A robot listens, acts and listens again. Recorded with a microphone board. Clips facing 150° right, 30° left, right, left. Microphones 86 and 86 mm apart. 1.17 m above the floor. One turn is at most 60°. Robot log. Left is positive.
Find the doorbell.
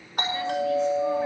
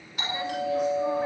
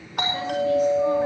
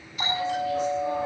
note: The doorbell: 110° right.
cmd yaw -60
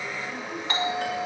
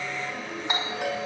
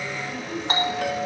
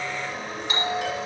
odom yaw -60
note: The doorbell is now 45° right.
cmd yaw -45
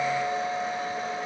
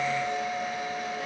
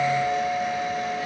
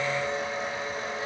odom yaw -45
note: The doorbell is now 35° right.
cmd yaw -35
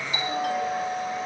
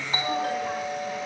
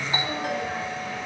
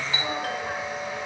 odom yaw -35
note: The doorbell is now 20° right.
cmd yaw -20
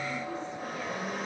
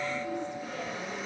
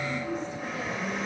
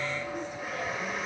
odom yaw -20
cmd idle
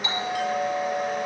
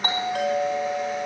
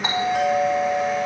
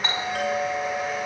note: The doorbell is now 10° right.
cmd yaw -10
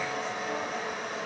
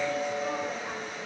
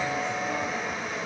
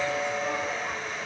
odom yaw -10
end: Facing the doorbell.